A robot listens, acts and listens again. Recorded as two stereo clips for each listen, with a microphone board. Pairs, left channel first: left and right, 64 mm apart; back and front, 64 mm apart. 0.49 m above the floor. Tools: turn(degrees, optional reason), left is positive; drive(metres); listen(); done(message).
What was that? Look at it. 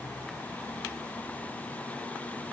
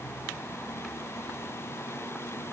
listen()
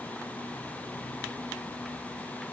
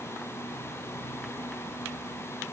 listen()
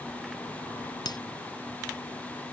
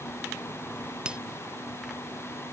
turn(degrees=75, reason="The breaking glass: 75° left.")
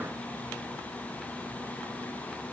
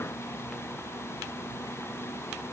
done("Facing where the breaking glass came from. I can't hear it now.")